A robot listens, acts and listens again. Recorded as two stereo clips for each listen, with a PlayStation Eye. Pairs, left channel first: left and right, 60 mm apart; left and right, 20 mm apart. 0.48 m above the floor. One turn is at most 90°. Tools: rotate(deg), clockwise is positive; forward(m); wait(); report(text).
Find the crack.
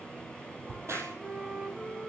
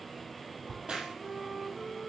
rotate(50)
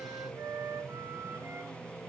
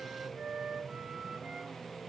wait()
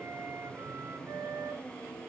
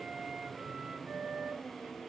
report("I heard a crack, but can't make it out now. It was about straight ahead or 80° right.")